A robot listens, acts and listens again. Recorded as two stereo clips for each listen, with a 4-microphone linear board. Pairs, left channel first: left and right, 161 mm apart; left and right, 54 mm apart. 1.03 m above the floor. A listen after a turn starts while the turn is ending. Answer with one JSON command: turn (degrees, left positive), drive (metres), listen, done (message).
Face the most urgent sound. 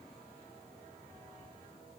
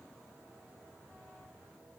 {"listen": true}
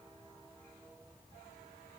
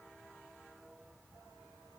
{"listen": true}
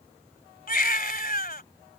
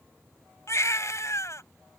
{"turn": 65}
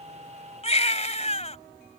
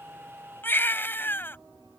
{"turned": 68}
{"turn": 45}
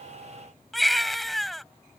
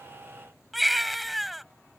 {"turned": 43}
{"done": "Found it: a baby crying, straight ahead."}